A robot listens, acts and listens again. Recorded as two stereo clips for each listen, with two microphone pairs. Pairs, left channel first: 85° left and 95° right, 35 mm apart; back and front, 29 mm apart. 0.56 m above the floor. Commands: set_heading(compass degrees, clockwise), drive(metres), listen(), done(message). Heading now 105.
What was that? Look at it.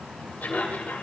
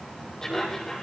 set_heading(350)
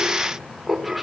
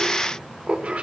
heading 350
done("Facing the laughter, 2 to 4 m away.")